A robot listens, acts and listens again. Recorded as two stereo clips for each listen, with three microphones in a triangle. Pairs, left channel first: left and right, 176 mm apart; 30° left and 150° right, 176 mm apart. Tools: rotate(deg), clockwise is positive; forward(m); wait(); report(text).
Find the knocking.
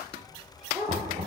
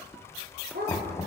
rotate(45)
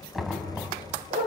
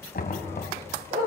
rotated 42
report("Facing the knocking, 2 to 4 m away.")